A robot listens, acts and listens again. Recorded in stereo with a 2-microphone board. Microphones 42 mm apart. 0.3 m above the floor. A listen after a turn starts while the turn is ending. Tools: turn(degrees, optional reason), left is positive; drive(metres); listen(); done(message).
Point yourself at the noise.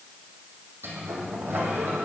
turn(degrees=-70, reason="The sliding door: about 70° right or 110° right.")
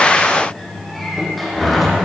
done("Facing the sliding door, 2 to 4 m away.")